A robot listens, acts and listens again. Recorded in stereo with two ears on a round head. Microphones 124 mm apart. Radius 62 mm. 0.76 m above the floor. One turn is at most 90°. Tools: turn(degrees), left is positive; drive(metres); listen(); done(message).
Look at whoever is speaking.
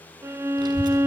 turn(degrees=-35)
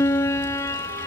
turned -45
turn(degrees=-90)
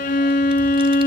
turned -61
turn(degrees=-40)
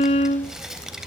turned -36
done("Found it: a child speaking, straight ahead.")